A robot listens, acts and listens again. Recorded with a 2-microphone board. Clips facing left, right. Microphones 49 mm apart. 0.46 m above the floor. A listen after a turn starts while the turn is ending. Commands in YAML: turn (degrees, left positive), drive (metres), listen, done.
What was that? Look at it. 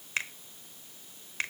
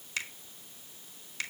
turn: 35
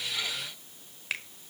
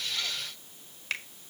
done: "Facing the finger snap."